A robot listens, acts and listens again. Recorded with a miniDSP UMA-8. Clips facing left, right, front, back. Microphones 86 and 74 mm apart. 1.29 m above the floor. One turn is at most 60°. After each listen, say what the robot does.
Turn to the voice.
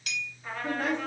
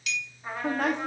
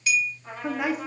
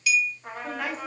Turn 60° right.
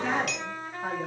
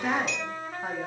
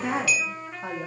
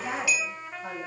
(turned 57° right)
Turn 20° right.
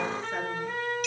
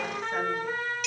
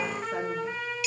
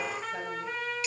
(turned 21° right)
Keep listening.
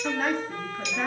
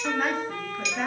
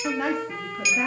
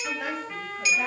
Facing the woman speaking.